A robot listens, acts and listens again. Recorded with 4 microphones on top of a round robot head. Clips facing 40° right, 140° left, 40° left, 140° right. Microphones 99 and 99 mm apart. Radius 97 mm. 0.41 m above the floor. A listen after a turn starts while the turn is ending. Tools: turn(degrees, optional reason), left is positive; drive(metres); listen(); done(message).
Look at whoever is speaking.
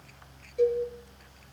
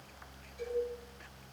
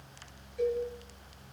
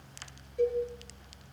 listen()
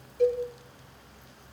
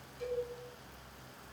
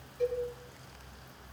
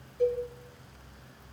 listen()
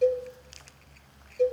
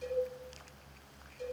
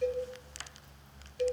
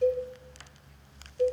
done("I can't make out anyone speaking to turn to.")